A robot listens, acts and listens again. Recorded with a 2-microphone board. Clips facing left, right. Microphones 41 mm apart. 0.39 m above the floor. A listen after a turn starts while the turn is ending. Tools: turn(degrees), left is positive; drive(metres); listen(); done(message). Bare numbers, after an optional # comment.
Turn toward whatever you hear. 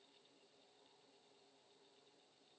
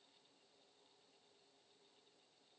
listen()
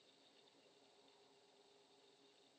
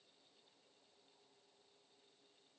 listen()
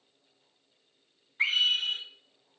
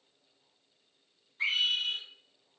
# The scream: about 55° left or 125° left.
turn(55)
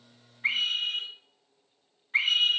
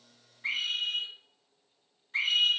# So it is at 55° left.
turn(55)
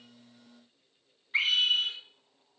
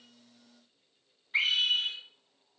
# The scream is now 10° left.
turn(10)
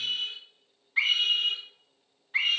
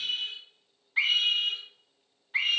done("Found it: a scream, straight ahead, 1 to 2 m away.")